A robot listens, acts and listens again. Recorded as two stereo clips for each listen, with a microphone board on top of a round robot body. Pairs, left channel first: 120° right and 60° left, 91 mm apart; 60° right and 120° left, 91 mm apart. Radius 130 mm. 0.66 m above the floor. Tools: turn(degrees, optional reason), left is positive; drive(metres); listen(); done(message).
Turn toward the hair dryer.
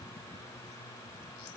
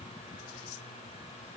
listen()
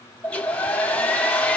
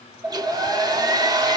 turn(degrees=165, reason="The hair dryer: 165° left.")
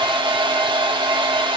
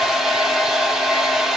turn(degrees=30, reason="The hair dryer is now 30° left.")
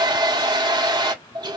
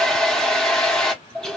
turn(degrees=20, reason="The hair dryer is now 20° left.")
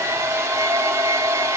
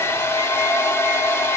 done("Facing the hair dryer, 1 to 2 m away.")